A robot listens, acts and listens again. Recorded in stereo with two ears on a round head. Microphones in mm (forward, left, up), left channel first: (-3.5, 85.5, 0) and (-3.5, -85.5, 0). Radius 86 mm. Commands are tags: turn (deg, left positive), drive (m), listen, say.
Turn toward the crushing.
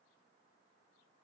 <listen/>
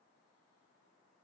<listen/>
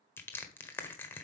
<turn deg="30"/>
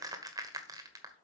<turn deg="-20"/>
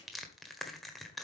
<say>Facing the crushing.</say>